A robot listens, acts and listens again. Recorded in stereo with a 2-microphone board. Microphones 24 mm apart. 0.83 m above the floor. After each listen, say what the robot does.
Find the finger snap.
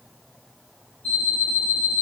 Keep listening.
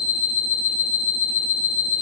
Keep listening.
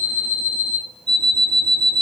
I can't make out a finger snap to turn to.